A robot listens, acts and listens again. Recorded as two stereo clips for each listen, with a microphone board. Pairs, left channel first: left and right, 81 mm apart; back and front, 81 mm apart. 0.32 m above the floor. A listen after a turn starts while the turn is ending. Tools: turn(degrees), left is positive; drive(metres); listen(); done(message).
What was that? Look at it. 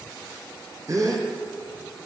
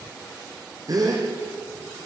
turn(degrees=-40)
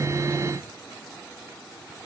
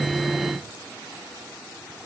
done("I heard a gasp from this way, but can't make it out now.")